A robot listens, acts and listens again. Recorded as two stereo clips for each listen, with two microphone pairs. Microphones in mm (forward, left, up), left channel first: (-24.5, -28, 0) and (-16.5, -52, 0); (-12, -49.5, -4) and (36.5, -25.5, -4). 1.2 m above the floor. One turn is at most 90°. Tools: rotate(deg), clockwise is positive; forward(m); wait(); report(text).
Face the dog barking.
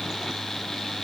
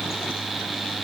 wait()
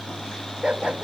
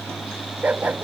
rotate(35)
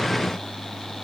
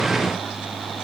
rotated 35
wait()
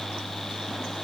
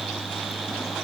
wait()
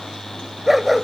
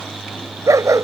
rotate(-10)
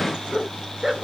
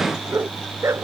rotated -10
report("Found it: a dog barking, straight ahead.")